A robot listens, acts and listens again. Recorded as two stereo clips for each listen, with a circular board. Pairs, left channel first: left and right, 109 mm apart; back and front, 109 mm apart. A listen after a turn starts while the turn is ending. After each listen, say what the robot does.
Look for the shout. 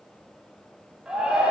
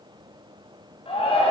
Turn 170° right.
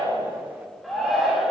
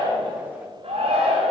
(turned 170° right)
Found it: a shout, straight ahead, 2 to 4 m away.